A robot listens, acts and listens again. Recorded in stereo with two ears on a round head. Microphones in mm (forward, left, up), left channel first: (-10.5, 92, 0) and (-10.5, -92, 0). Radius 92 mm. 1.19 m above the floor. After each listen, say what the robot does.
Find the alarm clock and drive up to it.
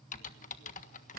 Keep listening.
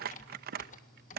Keep listening.
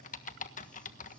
I can't make out an alarm clock, only crumpling and typing on a keyboard.